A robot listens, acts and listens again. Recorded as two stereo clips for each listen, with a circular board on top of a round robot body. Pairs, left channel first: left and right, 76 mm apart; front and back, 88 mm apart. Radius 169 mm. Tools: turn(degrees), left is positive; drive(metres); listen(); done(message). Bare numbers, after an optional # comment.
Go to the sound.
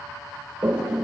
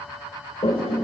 # The toilet flushing: 15° right.
turn(-15)
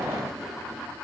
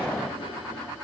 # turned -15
listen()
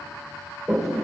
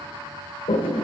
drive(1.0)
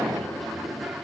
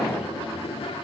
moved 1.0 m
drive(1.0)
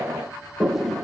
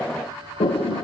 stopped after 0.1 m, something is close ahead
done("Arrived at the toilet flushing, straight ahead.")